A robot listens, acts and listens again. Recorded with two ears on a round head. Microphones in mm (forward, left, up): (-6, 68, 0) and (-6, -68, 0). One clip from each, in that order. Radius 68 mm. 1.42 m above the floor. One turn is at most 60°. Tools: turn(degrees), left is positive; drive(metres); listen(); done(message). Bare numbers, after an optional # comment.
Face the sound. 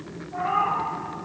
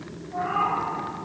# The cat meowing: about 30° left or 150° left.
turn(30)
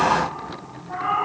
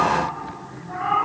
# So it is at 20° left.
turn(20)
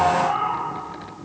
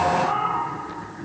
# The cat meowing is now 10° left.
turn(10)
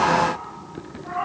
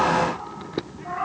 # The cat meowing is now 10° left.
turn(10)
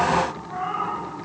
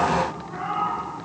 # The cat meowing is now 10° left.
turn(10)
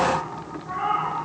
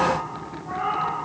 done("Found it: a cat meowing, straight ahead, 2 to 4 m away.")